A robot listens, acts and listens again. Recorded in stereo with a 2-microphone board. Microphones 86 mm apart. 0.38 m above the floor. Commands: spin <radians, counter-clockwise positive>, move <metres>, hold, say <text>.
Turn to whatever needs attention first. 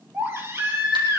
spin -0.52
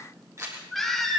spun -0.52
say Found it: a baby crying, straight ahead, over 4 m away.